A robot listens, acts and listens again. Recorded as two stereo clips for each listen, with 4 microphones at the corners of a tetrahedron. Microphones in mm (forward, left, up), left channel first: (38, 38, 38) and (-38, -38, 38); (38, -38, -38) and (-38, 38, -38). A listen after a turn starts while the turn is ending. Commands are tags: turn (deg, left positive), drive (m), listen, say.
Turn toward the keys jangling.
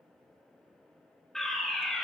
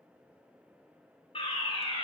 <listen/>
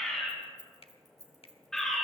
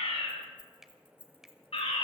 <turn deg="-80"/>
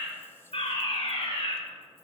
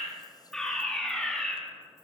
<listen/>
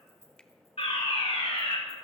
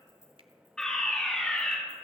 <turn deg="20"/>
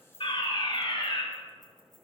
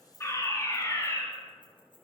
<say>Found it: keys jangling, straight ahead, over 4 m away.</say>